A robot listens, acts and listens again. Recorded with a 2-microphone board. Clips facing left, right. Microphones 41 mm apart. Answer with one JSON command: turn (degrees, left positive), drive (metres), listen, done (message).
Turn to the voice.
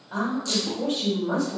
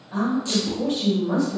{"turn": 90}
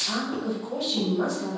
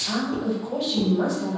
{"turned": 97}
{"turn": -10}
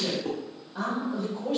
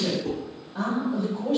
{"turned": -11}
{"done": "Found it: a woman speaking, straight ahead, 1 to 2 m away."}